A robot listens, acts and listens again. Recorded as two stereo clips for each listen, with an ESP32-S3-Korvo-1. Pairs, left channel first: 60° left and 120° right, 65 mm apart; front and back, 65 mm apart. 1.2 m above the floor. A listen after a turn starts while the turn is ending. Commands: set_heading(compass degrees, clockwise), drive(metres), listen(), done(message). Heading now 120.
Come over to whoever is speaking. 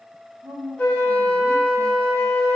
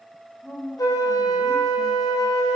set_heading(225)
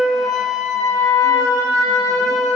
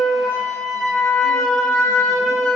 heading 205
set_heading(225)
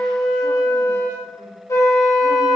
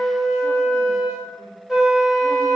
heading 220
listen()
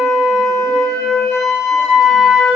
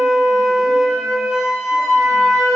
done("I heard a woman speaking from this way, but can't make it out now. I did not reach it.")